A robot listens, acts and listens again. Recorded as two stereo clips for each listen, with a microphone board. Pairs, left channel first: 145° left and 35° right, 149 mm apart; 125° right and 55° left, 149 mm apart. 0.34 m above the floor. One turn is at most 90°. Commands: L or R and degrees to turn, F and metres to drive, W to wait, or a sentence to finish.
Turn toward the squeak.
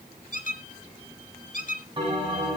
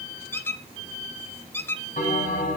L90
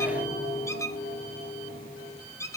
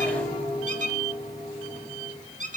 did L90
L75
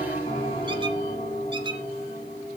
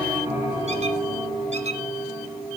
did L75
W
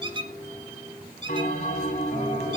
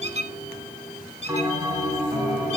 L20
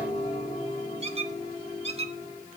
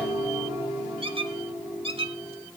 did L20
Facing the squeak.